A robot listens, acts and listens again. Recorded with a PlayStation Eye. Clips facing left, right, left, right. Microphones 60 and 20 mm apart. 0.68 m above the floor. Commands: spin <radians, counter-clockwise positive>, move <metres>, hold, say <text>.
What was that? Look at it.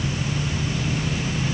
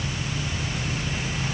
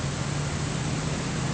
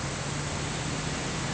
hold
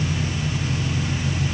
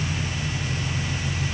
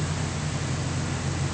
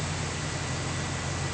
hold
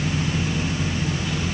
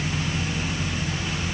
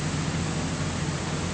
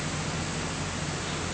say I can't make out anything.